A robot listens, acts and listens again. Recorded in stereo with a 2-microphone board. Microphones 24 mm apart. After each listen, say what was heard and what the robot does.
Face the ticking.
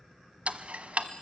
The ticking: about 70° right or 110° right. Turn 70° right.
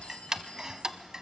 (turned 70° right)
So it is at 30° right. Turn 30° right.
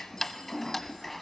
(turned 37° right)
The ticking is now 10° left. Turn 10° left.
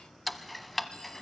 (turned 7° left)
Found it: ticking, straight ahead.